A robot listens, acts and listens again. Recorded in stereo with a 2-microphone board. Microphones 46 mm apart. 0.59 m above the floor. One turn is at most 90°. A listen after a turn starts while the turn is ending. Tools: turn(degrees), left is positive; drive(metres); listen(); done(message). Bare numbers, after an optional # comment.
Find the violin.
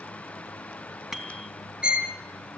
# The violin: about 25° right or 155° right.
turn(-25)
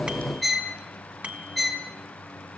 done("Found it: a violin, straight ahead.")